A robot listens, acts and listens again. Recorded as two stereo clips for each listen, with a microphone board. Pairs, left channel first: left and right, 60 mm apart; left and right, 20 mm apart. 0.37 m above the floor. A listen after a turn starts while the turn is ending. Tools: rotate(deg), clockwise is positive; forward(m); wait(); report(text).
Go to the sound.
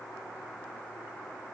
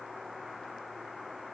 wait()
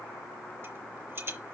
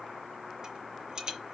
rotate(40)
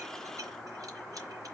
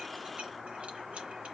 wait()
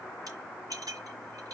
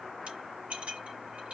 rotate(100)
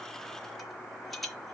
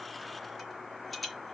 forward(1.0)
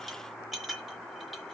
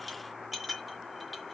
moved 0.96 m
forward(1.0)
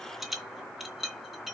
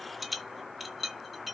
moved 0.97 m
forward(1.0)
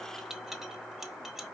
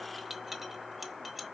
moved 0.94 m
forward(1.0)
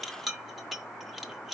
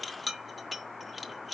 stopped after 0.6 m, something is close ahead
report("I am next to the rattle.")